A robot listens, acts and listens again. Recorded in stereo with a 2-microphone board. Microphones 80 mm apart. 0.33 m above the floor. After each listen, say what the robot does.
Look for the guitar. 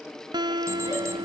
Turn 70° right.
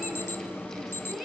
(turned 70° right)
Keep listening.
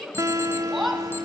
Turn 40° right.
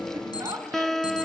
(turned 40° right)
Facing the guitar.